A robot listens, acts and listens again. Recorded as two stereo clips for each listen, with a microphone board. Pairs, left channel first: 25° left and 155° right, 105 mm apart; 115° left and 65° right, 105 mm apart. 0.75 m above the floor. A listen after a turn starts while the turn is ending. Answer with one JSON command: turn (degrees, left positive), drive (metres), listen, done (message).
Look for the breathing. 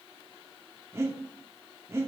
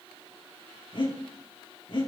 {"turn": 140}
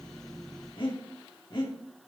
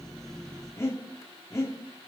{"turn": 55}
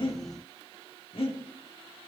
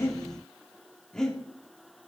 {"turn": 30}
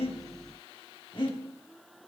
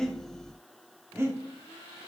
{"done": "Facing the breathing, 2 to 4 m away."}